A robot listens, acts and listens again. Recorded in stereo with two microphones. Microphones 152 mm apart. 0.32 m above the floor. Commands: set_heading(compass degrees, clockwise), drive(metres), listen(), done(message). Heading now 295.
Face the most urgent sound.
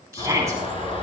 set_heading(315)
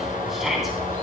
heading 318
done("Found it: a shout, straight ahead, 2 to 4 m away.")